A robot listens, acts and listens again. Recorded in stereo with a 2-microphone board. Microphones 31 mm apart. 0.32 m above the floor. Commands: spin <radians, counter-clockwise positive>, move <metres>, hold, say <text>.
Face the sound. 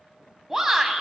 spin -0.52
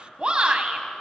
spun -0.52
spin -2.36
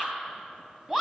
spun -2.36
spin -0.17
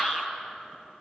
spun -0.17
say Facing the shout, 1 to 2 m away.